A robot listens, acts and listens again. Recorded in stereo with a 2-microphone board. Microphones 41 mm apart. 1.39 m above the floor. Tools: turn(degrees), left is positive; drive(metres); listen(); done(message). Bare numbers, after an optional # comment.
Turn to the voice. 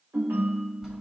listen()
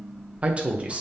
# The man speaking: about 30° right or 150° right.
turn(-30)
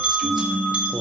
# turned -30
listen()
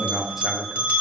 # So it is at 10° right.
turn(-10)
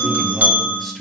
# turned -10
listen()
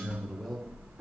listen()
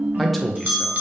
done("Found it: a man speaking, straight ahead, under 1 m away.")